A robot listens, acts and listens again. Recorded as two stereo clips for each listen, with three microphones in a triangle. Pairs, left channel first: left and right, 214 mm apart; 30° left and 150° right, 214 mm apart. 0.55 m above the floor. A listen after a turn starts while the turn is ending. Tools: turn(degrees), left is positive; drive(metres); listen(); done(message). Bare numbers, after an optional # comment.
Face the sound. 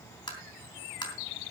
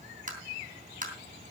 # The tapping: 160° left.
turn(160)
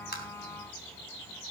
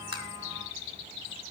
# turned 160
listen()
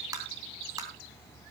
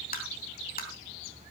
# The tapping is now 15° right.
turn(-15)
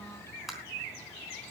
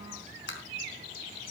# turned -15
done("Found it: tapping, straight ahead.")